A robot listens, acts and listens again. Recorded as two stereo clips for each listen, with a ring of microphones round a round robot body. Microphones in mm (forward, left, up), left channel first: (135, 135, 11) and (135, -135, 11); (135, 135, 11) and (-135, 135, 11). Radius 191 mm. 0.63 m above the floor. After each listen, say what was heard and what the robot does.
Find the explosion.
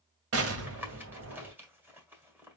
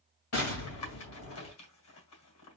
The explosion: 55° right. Turn 55° right.
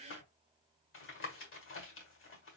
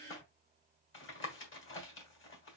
Facing where the explosion came from. I can't hear it now.